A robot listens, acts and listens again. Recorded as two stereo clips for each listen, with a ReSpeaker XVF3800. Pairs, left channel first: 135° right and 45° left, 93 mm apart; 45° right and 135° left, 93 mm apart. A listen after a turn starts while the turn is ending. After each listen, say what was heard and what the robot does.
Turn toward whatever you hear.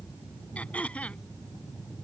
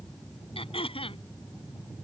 The throat clearing: 60° right. Turn 60° right.
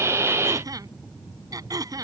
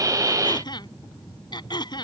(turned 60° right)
Found it: throat clearing, straight ahead.